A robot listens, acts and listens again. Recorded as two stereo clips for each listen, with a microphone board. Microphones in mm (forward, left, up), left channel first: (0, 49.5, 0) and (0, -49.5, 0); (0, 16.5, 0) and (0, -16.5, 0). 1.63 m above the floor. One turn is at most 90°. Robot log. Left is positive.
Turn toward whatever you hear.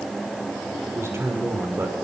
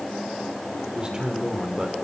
note: The man speaking: about 25° right or 155° right.
cmd yaw -25
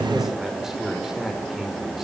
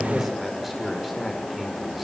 end: Found it: a man speaking, straight ahead, over 4 m away.